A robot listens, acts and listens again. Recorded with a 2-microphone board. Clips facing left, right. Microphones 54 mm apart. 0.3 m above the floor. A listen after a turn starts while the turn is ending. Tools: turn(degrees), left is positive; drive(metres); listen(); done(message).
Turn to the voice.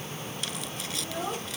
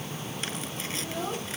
turn(degrees=30)
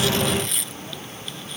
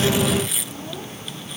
listen()
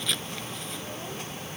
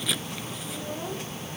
listen()
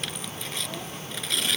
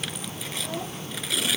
done("I heard a child speaking, but can't make it out now. It was about 20° right or 140° left.")